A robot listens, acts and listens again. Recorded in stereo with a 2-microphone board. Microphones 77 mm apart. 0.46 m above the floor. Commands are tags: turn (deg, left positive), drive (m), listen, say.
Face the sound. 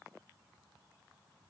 <listen/>
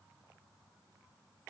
<listen/>
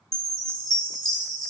<turn deg="30"/>
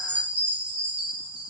<turn deg="-20"/>
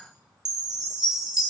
<say>Facing the chime, 2 to 4 m away.</say>